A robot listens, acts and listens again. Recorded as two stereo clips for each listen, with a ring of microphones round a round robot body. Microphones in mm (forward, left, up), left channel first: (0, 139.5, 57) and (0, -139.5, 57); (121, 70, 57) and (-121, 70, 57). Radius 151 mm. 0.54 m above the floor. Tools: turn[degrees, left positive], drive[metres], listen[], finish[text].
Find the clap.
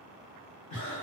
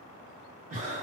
Action: listen[]
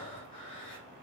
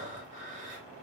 Action: listen[]
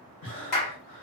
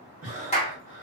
Thought: The clap: 65° left.
Action: turn[65]
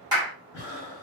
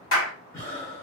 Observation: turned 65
Thought: The clap is now 15° right.
Action: turn[-15]
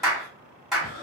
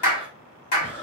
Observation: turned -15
Action: finish[Found it: a clap, straight ahead, 1 to 2 m away.]